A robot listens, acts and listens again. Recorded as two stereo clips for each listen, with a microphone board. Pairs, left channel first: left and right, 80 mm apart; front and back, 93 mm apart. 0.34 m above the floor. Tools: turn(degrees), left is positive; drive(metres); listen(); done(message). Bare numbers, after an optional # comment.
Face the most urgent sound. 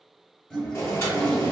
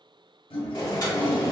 listen()
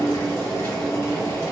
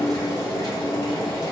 listen()
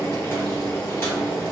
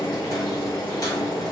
done("I can't make out anything urgent, only boiling and a toilet flushing.")